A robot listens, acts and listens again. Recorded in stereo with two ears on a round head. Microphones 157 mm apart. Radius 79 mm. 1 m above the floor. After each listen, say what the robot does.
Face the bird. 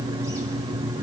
Keep listening.
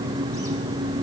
Keep listening.
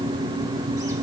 I can't make out a bird.